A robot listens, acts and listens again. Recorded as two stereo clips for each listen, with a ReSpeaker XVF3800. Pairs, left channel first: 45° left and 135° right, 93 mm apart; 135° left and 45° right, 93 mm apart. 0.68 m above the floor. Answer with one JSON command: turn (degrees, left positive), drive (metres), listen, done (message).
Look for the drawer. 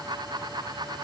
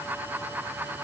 {"listen": true}
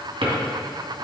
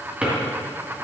{"turn": -120}
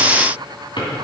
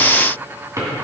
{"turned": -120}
{"turn": 10}
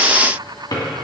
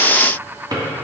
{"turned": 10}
{"done": "Found it: a drawer, straight ahead, 2 to 4 m away."}